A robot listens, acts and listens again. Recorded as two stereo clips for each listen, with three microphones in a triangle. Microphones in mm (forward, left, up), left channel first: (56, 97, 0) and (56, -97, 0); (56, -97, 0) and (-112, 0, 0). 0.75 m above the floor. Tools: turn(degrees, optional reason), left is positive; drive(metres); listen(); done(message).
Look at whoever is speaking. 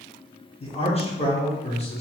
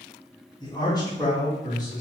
turn(degrees=35, reason="The man speaking: 35° left.")
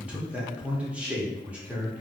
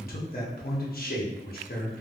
done("Found it: a man speaking, straight ahead.")